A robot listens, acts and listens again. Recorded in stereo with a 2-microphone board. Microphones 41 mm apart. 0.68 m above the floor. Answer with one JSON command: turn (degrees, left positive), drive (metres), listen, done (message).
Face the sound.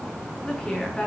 {"turn": 20}
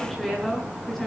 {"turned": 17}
{"turn": 30}
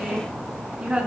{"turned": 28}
{"turn": -20}
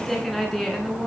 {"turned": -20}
{"done": "Found it: a woman speaking, straight ahead, over 4 m away."}